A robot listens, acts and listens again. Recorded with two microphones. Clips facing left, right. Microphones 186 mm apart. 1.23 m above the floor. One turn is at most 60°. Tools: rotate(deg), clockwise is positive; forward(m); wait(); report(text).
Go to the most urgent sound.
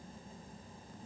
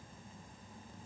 wait()
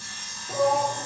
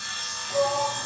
rotate(-60)
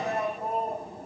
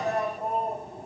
forward(1.0)
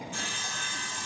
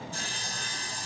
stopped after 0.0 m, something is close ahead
wait()
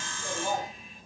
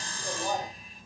report("Something is in my way. I am facing the shout but have not reached it.")